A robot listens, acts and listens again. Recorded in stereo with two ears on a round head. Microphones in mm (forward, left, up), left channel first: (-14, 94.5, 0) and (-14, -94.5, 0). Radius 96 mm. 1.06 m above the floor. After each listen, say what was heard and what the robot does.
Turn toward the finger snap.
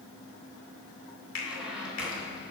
The finger snap: about 60° left or 120° left. Turn 60° left.
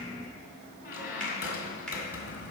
Keep listening.
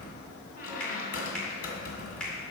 Keep listening.
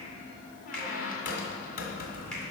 I heard a finger snap, but can't make it out now. It was about straight ahead or 60° left.